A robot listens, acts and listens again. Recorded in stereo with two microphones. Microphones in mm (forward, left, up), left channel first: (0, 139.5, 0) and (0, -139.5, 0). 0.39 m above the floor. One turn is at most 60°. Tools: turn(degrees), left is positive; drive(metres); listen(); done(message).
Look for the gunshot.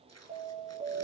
listen()
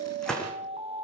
turn(degrees=30)
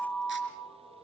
listen()
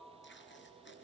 done("I heard a gunshot, but can't make it out now. It was about 25° right or 145° left.")